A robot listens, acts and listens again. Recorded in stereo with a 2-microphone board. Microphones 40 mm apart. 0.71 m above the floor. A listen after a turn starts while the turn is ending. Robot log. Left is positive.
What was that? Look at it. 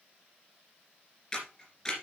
note: The camera shutter: about 15° left or 165° left.
cmd yaw +15
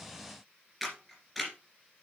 end: Found it: a camera shutter, straight ahead, 2 to 4 m away.